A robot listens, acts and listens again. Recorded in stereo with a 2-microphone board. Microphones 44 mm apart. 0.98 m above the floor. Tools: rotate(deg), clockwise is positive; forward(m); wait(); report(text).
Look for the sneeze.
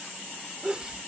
rotate(20)
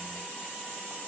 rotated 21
wait()
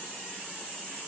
report("I heard a sneeze, but can't make it out now. It was about straight ahead or 140° right.")